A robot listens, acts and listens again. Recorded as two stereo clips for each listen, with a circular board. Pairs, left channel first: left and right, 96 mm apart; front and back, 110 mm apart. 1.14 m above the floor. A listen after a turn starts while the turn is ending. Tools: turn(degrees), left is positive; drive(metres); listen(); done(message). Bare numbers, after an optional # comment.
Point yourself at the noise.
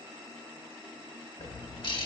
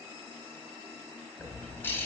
# The bird: 70° left.
turn(70)
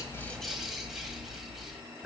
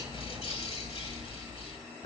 done("Found it: a bird, straight ahead.")